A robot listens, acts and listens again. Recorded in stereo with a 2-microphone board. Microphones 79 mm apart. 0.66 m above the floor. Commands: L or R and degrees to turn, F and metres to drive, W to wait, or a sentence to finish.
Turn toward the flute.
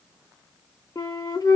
L50
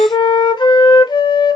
L80
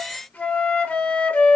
L20
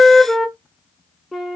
Facing the flute.